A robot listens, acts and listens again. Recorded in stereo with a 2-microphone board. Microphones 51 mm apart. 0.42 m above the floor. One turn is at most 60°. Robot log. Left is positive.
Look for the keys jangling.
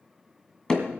cmd idle
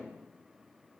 cmd idle
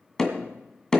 end: I can't make out keys jangling to turn to.